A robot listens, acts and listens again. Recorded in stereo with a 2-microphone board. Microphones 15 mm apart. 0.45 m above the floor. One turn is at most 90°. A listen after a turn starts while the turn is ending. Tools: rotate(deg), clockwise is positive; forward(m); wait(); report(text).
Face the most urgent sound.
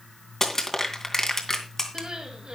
rotate(65)
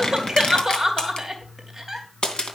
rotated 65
rotate(20)
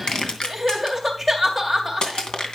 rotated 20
report("Facing the crying.")